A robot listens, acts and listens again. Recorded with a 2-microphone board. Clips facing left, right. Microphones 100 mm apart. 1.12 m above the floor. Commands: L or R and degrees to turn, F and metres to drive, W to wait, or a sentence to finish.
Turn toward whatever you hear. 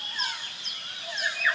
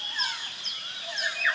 W
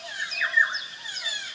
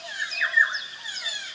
W
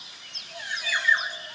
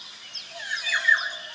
I can't make out anything.